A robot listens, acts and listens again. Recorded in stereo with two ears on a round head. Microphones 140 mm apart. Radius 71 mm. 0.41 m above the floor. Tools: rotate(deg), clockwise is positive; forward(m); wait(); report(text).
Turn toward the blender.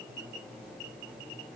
wait()
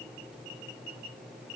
wait()
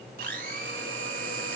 rotate(60)
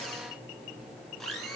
report("Found it: a blender, straight ahead, 2 to 4 m away.")